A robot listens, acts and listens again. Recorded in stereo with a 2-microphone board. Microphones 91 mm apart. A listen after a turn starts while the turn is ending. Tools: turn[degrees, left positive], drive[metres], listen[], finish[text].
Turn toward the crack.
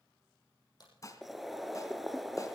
Thought: The crack: about 50° left or 130° left.
Action: turn[50]
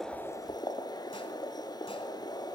Action: listen[]
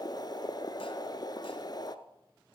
Action: finish[I heard a crack, but can't make it out now. It was about straight ahead or 80° left.]